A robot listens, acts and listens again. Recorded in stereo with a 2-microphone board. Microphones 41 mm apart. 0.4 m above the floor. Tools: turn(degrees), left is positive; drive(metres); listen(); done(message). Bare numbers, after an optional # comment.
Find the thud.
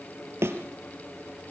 turn(-90)
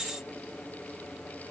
done("Facing where the thud came from. I can't hear it now.")